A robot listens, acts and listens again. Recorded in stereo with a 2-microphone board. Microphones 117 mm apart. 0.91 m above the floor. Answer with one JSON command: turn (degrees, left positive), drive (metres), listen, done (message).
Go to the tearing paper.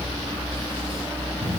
{"listen": true}
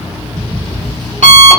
{"listen": true}
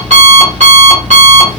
{"done": "I can't make out tearing paper, only an alarm clock."}